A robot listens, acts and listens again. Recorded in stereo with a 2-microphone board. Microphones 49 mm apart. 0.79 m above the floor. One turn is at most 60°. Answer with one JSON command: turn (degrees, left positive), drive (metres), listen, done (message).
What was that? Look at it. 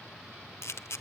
{"turn": 60}
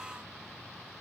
{"listen": true}
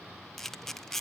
{"done": "Facing the camera shutter, under 1 m away."}